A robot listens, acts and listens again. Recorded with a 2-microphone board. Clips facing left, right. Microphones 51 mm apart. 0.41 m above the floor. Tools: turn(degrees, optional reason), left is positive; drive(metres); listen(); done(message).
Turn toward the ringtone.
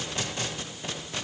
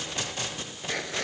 listen()
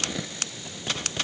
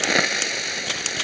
listen()
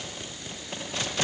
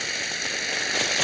done("I can't make out a ringtone to turn to.")